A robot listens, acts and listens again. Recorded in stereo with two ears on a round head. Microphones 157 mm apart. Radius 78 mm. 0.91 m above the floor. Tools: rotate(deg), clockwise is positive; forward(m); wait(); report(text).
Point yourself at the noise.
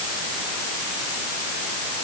wait()
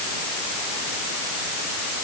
wait()
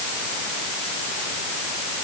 report("I can't make out anything.")